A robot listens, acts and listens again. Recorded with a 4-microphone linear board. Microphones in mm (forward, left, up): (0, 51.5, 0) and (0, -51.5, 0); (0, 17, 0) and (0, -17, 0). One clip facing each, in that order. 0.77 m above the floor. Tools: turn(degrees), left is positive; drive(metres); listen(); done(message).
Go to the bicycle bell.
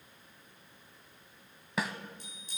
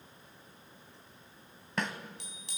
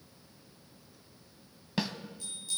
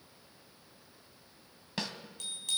turn(degrees=-90)
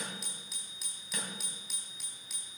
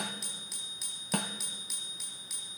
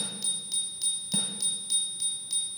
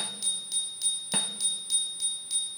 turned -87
drive(metres=1.0)
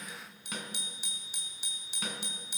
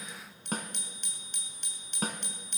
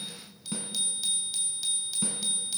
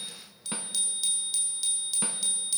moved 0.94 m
drive(metres=1.0)
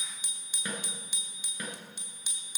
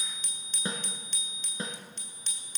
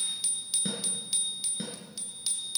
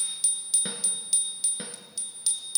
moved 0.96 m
turn(degrees=10)
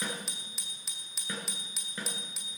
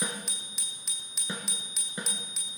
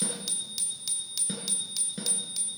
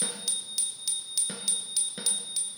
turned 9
drive(metres=1.0)
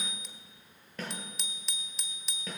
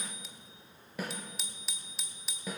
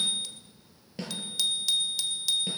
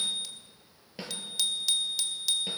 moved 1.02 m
drive(metres=1.0)
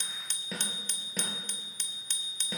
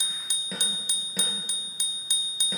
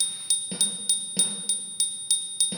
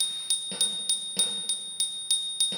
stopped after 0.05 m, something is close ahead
turn(degrees=-15)
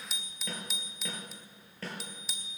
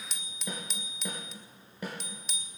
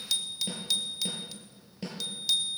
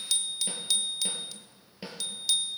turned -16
done("Arrived at the bicycle bell, straight ahead.")